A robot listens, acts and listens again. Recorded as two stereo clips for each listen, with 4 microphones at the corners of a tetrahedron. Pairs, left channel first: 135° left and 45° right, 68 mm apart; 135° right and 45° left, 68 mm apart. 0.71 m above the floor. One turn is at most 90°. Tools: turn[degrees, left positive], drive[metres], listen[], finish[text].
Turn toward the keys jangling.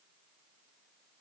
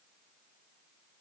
Action: listen[]
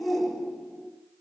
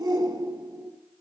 Action: listen[]
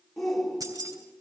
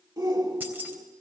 Thought: The keys jangling: 20° right.
Action: turn[-20]
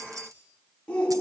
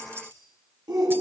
Thought: The keys jangling is now 10° right.
Action: turn[-10]
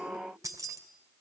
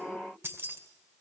Thought: The keys jangling is now 10° right.
Action: turn[-10]
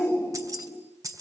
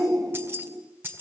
Thought: The keys jangling is now 15° right.
Action: turn[-15]
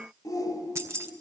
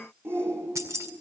Action: finish[Found it: keys jangling, straight ahead.]